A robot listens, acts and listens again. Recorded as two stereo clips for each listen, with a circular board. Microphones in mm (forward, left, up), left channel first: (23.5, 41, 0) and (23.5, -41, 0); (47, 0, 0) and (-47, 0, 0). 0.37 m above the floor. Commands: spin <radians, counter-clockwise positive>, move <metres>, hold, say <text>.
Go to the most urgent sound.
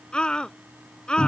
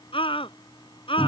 spin 0.17
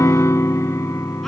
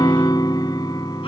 hold
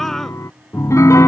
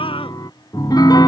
hold
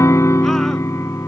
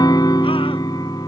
say I heard a scream from this way, but can't make it out now. I did not reach it.